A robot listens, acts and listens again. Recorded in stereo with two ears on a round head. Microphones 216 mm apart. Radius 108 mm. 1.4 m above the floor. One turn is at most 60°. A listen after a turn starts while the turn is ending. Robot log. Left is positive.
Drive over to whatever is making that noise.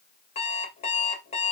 note: The alarm clock: about 25° left or 155° left.
cmd yaw +25
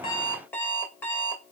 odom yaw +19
note: So it is at 10° left.
cmd yaw +10
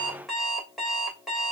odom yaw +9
cmd fwd 1.0
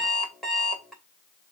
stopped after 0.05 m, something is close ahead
end: Something is in my way. I am facing the alarm clock but have not reached it.